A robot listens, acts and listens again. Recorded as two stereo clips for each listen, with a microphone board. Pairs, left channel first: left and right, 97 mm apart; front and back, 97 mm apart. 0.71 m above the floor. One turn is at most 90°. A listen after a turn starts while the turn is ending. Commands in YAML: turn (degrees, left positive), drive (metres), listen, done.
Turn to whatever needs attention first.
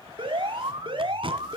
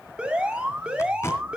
turn: -90
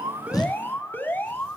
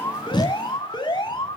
turn: 25
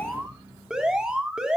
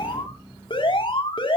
done: "Found it: an alarm, straight ahead, 2 to 4 m away."